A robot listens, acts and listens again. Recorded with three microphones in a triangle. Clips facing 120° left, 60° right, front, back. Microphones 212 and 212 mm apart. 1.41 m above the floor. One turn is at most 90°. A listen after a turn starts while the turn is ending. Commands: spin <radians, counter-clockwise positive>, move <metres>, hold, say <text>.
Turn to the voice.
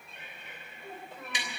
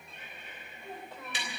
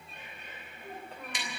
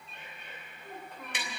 spin 0.96
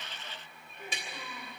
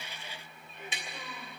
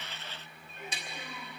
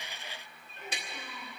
hold
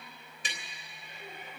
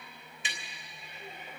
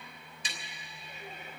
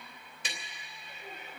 hold
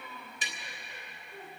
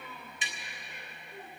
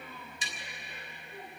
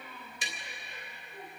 spin 0.44
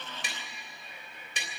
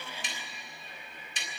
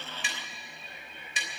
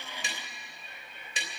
hold
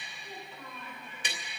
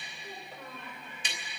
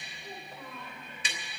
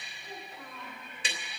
spin -0.17
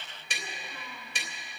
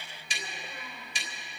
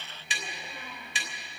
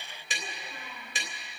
hold
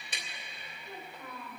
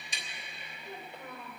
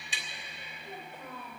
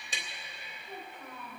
say Facing the child speaking.